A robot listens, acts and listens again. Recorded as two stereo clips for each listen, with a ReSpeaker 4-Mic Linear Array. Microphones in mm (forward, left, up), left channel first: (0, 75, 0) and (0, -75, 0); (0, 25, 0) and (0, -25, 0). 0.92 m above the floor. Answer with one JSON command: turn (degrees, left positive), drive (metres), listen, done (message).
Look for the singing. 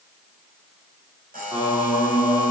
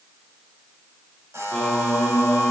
{"turn": -20}
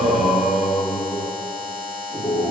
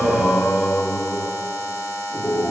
{"turn": -25}
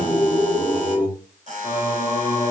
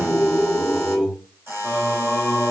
{"turn": -20}
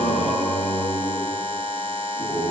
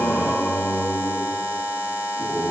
{"done": "Facing the singing."}